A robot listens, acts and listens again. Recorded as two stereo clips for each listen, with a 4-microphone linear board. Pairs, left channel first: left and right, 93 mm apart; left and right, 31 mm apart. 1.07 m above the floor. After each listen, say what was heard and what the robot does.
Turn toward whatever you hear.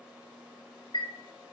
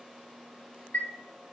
Turn 90° left.
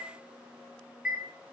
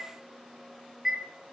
So it is at 10° right. Turn 10° right.
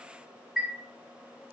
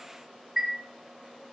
Found it: a chime, straight ahead.